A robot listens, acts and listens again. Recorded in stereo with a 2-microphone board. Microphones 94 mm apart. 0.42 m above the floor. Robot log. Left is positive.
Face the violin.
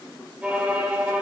cmd yaw -30
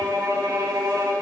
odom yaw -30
note: So it is at 130° right.
cmd yaw -130
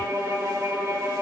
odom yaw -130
note: The violin is now 40° right.
cmd yaw -40
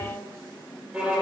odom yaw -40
note: The violin is now 15° right.
cmd yaw -15
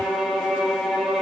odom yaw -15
end: Facing the violin.